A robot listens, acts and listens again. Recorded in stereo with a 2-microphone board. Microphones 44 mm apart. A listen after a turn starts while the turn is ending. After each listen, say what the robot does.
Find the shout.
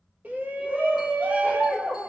Turn 40° right.
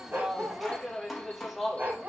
Facing the shout, 1 to 2 m away.